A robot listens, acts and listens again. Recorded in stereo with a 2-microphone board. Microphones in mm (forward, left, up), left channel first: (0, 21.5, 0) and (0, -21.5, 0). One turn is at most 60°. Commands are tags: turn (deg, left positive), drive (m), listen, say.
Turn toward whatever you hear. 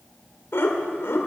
<turn deg="60"/>
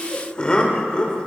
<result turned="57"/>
<turn deg="25"/>
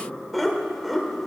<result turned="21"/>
<say>Found it: laughter, straight ahead.</say>